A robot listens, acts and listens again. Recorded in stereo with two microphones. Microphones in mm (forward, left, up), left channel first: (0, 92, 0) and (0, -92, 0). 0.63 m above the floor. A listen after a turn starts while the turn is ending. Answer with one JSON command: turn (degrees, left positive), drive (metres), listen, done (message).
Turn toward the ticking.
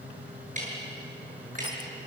{"turn": -45}
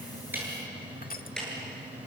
{"done": "Facing the ticking."}